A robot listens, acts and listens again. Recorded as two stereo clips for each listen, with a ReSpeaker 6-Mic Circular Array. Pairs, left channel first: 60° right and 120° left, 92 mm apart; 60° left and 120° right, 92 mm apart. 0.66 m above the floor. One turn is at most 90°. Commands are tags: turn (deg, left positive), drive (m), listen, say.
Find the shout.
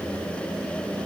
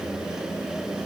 <listen/>
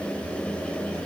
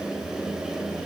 <listen/>
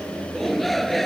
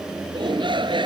<turn deg="-90"/>
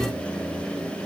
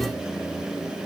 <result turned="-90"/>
<turn deg="-60"/>
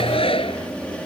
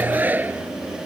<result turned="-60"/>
<turn deg="-50"/>
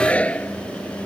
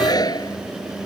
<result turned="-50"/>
<turn deg="15"/>
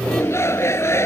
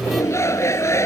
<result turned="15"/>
<say>Facing the shout.</say>